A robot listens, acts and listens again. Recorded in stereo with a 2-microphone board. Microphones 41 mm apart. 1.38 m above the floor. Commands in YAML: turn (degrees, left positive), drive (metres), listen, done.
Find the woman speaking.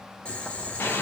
listen: true
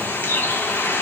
listen: true
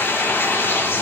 done: "I can't make out a woman speaking, only boiling and a bird."